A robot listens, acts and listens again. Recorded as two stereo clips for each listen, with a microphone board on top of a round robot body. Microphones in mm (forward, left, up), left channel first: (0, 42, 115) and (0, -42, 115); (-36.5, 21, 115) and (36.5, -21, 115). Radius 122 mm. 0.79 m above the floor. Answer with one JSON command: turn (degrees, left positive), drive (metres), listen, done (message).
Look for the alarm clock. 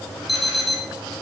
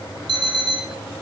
{"done": "Facing the alarm clock, over 4 m away."}